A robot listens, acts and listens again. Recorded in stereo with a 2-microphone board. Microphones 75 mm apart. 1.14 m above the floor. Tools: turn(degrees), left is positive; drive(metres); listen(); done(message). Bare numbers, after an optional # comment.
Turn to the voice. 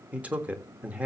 # The man speaking: about 20° right or 160° right.
turn(-20)
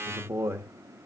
# So it is at 140° right.
turn(-140)
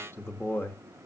# The man speaking is now 35° left.
turn(35)
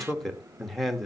done("Found it: a man speaking, straight ahead.")